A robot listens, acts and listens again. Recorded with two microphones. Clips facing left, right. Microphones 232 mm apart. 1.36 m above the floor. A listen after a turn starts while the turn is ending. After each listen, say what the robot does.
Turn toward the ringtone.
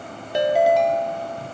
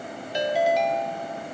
Turn 55° left.
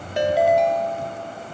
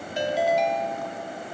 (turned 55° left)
Turn 65° left.
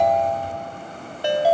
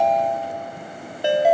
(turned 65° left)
Turn 20° right.
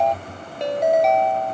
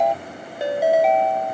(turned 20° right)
Facing the ringtone.